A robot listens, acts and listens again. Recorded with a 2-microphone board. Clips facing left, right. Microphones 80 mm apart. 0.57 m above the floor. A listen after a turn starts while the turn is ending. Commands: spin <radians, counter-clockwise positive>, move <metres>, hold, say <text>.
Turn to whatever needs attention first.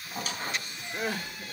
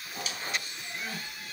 spin 1.31
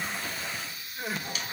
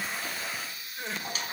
say Found it: crying, straight ahead.